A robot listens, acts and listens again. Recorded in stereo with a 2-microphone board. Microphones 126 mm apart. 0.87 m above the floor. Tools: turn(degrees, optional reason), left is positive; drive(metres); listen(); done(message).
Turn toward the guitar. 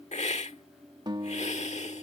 turn(degrees=-35, reason="The guitar: about 35° right or 145° right.")
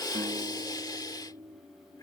turn(degrees=-110, reason="So it is at 110° right.")
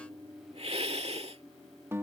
turn(degrees=-20, reason="The guitar is now 20° right.")
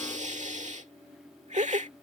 listen()
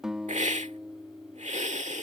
done("Facing the guitar.")